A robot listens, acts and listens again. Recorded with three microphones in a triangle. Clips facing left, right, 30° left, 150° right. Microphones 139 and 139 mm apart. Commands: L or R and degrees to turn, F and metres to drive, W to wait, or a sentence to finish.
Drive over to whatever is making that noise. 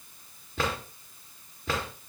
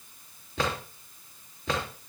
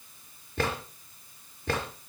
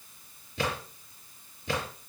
F1.0
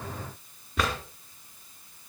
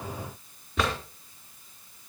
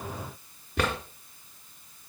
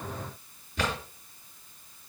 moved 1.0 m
F1.0
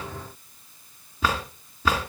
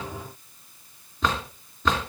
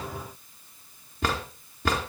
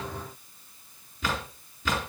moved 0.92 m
L10
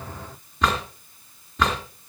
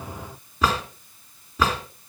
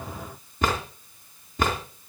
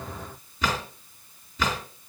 F1.0
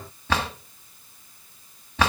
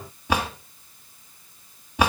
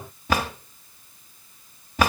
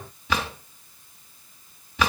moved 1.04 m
R15
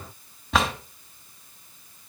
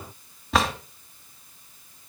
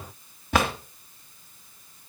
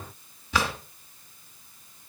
F1.0
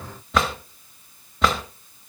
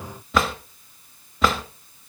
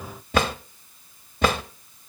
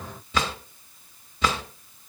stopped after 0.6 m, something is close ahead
Arrived at the drawer, straight ahead.